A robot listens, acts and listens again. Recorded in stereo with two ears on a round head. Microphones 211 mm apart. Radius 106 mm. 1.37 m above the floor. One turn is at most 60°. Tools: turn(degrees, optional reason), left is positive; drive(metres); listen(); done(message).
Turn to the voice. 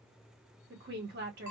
turn(degrees=-45, reason="The woman speaking: about 45° right or 135° right.")
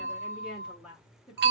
done("Found it: a woman speaking, straight ahead.")